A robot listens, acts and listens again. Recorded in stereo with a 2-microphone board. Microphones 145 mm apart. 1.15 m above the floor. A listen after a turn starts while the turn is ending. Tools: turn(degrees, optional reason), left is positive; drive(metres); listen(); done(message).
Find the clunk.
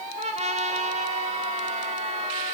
listen()
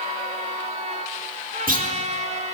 turn(degrees=-75, reason="The clunk: about 75° right or 105° right.")
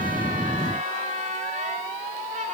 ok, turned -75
listen()
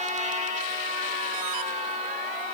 done("I heard a clunk, but can't make it out now. It was about straight ahead or 30° right.")